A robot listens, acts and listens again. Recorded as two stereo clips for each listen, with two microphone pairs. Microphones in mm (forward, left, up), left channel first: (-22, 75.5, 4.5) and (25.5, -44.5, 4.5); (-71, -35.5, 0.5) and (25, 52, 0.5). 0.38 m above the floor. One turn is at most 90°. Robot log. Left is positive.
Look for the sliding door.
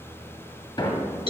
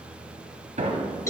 note: The sliding door: 60° left.
cmd yaw +60
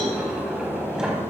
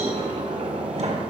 note: The sliding door is now 15° left.
cmd yaw +15
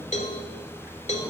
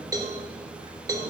cmd idle
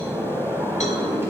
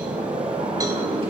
end: Facing the sliding door, 1 to 2 m away.